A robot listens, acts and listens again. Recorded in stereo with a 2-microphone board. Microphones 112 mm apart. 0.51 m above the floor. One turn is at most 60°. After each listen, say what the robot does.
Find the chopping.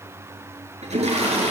Keep listening.
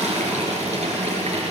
Keep listening.
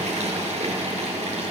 I can't make out chopping, only a toilet flushing.